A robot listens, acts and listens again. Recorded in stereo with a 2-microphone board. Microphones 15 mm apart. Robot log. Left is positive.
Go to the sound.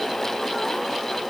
cmd idle
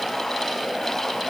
cmd idle
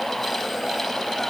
end: I can't make out anything.